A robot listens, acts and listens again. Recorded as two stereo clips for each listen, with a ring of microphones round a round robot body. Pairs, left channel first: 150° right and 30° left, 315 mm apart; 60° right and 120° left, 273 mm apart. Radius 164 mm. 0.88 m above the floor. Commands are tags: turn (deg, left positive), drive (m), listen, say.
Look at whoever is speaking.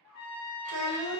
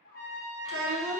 <turn deg="170"/>
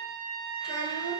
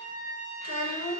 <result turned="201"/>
<turn deg="-30"/>
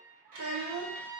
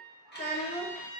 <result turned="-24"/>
<say>Facing the child speaking.</say>